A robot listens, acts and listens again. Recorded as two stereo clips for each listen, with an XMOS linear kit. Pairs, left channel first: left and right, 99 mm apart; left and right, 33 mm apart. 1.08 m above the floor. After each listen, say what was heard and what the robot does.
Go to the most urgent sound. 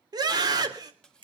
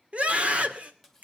The scream: about 45° right or 135° right. Turn 45° right.
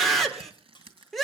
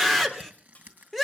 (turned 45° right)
Drive 1.0 m forward.
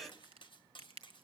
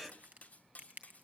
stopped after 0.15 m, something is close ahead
Keep listening.
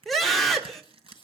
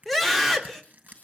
Blocked. The scream is further on, straight ahead.